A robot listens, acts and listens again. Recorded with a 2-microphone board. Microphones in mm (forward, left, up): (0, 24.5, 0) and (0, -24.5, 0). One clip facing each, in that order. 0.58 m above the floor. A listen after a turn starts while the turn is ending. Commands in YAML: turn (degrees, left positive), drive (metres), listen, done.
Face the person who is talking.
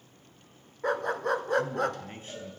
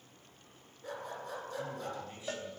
turn: 50
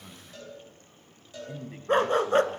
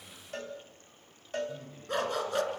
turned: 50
turn: 80
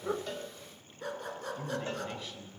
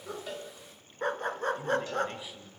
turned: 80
turn: -10
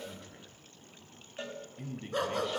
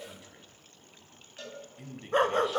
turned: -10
done: "Found it: a man speaking, straight ahead."